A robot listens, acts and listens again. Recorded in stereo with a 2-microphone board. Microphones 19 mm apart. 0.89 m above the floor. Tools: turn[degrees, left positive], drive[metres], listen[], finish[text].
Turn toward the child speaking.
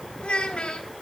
Action: turn[90]
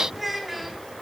Thought: So it is at 10° right.
Action: turn[-10]
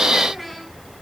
Action: finish[Facing the child speaking.]